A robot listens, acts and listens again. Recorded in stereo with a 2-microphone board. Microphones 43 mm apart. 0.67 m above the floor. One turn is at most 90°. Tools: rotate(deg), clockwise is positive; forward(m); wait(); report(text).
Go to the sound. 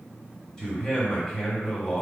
rotate(-20)
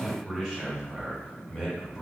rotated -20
forward(1.0)
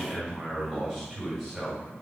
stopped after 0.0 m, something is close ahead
report("Blocked. The man speaking is further on, straight ahead.")